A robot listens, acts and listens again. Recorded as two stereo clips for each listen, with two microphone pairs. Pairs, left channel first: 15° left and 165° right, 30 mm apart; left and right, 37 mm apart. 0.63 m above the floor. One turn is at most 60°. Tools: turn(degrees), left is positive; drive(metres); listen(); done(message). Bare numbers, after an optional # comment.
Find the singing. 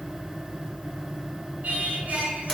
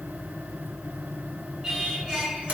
# The singing: 160° right.
turn(-60)
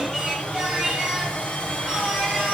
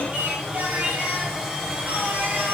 # The singing is now 100° right.
turn(-60)
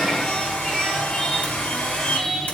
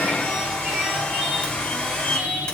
# The singing is now 50° right.
turn(-50)
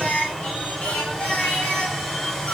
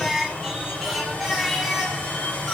done("Found it: singing, straight ahead, over 4 m away.")